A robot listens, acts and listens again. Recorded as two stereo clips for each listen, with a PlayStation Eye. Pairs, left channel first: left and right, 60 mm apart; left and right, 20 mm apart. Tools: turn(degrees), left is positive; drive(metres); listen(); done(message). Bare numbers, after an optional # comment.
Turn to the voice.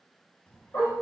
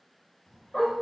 # The child speaking: about 25° left or 155° left.
turn(25)
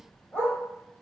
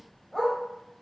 # So it is at 125° left.
turn(125)
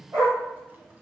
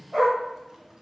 # The child speaking is now 35° right.
turn(-35)
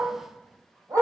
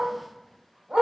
# The child speaking is now 15° right.
turn(-15)
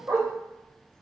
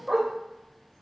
done("Found it: a child speaking, straight ahead.")